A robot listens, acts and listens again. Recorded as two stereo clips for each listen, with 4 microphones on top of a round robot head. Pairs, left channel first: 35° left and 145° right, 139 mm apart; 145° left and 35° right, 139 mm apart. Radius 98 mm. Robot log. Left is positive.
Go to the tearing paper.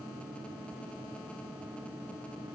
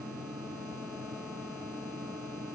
cmd idle
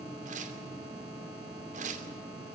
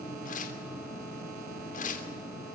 note: The tearing paper: straight behind.
cmd yaw +180
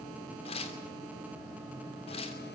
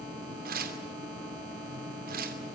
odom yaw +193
note: The tearing paper is now 15° right.
cmd yaw -15
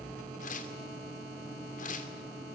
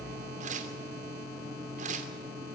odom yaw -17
cmd fwd 1.0
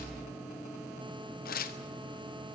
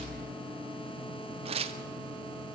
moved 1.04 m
note: The tearing paper is now 15° left.
cmd yaw +15
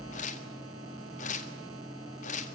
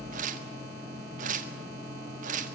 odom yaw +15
cmd fwd 1.0
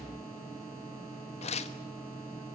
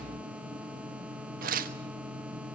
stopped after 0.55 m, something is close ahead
note: The tearing paper is now 10° right.
cmd yaw -10
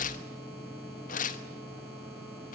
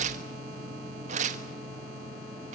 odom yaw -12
end: I am next to the tearing paper.